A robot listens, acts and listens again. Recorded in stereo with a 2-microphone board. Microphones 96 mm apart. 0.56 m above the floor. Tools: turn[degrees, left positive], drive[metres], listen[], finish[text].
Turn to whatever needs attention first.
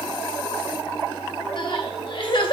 Thought: The crying: about 55° left or 125° left.
Action: turn[55]
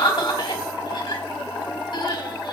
Thought: So it is at 60° left.
Action: turn[60]
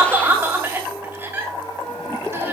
Thought: The crying is now 25° right.
Action: turn[-25]
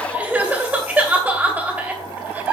Thought: The crying is now 15° right.
Action: turn[-15]
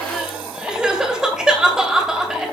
Action: finish[Facing the crying, 2 to 4 m away.]